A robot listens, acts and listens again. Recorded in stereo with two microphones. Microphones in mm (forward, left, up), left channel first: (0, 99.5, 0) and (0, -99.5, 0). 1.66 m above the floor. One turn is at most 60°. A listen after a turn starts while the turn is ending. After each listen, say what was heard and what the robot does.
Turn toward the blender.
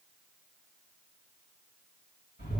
Keep listening.
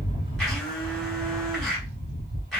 Turn 30° left.
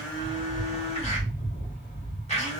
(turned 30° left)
So it is at 145° left. Turn 60° left.
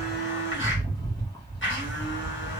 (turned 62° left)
The blender is now 85° left. Turn 60° left.
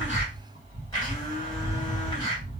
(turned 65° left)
The blender is now 20° left. Turn 20° left.
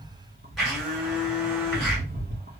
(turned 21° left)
Found it: a blender, straight ahead, 1 to 2 m away.